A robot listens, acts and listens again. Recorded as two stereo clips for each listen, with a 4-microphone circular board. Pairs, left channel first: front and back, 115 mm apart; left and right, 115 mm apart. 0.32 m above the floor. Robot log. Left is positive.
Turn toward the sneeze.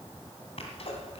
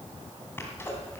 note: The sneeze: 20° left.
cmd yaw +20
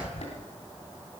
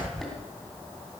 end: Facing the sneeze, 2 to 4 m away.